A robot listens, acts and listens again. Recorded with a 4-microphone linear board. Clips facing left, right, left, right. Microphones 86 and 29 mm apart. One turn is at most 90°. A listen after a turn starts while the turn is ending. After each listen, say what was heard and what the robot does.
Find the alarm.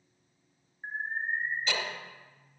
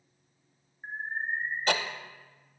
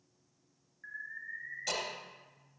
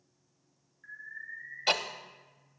The alarm: about 20° left or 160° left. Turn 20° left.
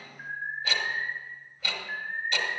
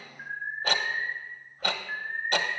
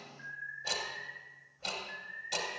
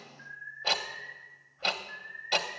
Found it: an alarm, straight ahead.